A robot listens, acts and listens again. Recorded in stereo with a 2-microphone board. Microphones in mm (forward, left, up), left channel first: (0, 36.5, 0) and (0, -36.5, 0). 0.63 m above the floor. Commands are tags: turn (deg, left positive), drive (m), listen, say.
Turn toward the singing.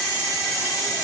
<listen/>
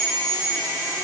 <listen/>
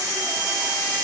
<say>I can't make out singing.</say>